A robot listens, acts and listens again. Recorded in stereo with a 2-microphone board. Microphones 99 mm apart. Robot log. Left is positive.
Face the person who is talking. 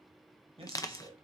cmd yaw -90
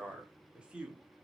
note: So it is at 15° right.
cmd yaw -15
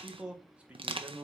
note: The man speaking is now 25° right.
cmd yaw -25
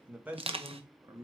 note: The man speaking is now 30° right.
cmd yaw -30
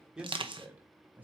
note: The man speaking is now 15° right.
cmd yaw -15
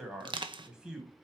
end: Facing the man speaking, 1 to 2 m away.